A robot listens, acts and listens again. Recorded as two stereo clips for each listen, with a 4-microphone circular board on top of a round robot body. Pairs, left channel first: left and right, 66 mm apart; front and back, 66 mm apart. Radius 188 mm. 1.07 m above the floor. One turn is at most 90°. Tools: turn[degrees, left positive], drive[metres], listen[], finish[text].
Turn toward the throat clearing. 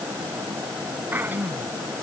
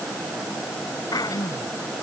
Thought: The throat clearing: 30° right.
Action: turn[-30]
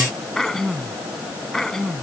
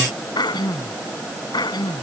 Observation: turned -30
Action: finish[Facing the throat clearing.]